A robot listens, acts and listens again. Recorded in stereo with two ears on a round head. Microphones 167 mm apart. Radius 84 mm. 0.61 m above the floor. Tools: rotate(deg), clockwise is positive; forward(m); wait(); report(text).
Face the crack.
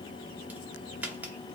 rotate(30)
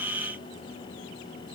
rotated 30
wait()
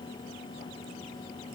report("I heard a crack, but can't make it out now. It was about 20° left or 140° right.")